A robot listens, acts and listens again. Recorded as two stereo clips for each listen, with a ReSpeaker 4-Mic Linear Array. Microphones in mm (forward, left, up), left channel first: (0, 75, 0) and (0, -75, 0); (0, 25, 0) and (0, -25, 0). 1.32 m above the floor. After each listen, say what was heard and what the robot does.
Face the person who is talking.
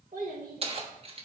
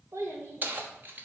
The child speaking: about 70° right or 110° right. Turn 70° right.
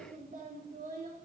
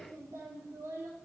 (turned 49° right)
So it is at 60° right. Turn 60° right.
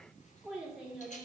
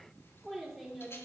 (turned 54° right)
Found it: a child speaking, straight ahead, 2 to 4 m away.